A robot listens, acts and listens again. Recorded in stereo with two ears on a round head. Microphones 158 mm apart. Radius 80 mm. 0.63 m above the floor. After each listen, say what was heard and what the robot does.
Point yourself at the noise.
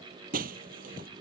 The breaking glass: about 50° right or 130° right. Turn 50° right.
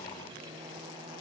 Keep listening.
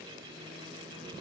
I heard breaking glass, but can't make it out now. It was about straight ahead or 80° right.